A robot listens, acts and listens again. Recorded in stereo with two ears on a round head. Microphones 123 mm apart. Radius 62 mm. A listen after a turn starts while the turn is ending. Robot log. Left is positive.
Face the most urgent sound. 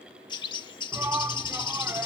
note: The shout: about 15° right or 165° right.
cmd yaw -15
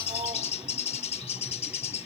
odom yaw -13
cmd idle
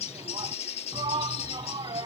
note: So it is at 150° right.
cmd yaw -150
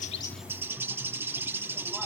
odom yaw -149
cmd idle
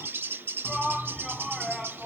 end: Found it: a shout, straight ahead.